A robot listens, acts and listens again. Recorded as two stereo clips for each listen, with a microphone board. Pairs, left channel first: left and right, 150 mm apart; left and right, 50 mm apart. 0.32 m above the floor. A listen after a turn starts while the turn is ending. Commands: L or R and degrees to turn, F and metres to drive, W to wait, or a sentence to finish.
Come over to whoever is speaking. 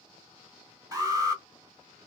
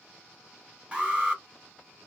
W
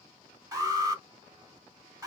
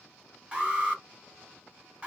W
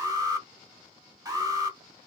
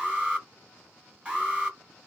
I can't make out anyone speaking to turn to.